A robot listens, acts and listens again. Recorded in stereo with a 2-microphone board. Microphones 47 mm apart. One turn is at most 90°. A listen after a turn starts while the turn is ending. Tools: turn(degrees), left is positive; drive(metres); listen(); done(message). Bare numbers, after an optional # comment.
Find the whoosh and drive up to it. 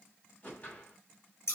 # The whoosh: about 35° left or 145° left.
turn(35)
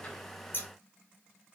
listen()
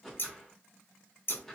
drive(1.0)
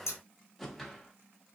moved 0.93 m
drive(1.0)
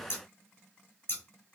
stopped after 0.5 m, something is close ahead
listen()
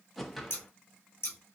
done("Arrived at the whoosh, straight ahead.")